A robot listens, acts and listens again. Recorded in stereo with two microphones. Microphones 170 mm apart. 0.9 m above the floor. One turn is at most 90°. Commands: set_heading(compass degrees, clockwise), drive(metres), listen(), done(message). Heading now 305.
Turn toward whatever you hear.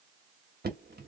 set_heading(15)
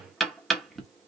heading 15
done("Facing the knocking.")